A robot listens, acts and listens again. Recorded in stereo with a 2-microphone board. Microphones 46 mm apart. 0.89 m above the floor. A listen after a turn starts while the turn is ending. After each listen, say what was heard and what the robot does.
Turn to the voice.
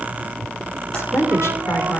The woman speaking: about 75° left or 105° left. Turn 75° left.
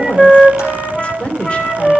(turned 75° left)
So it is at 25° left. Turn 25° left.
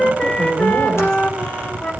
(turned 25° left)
Keep listening.
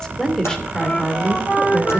The woman speaking is now 10° left. Turn 10° left.
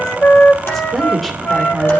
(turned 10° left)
Found it: a woman speaking, straight ahead.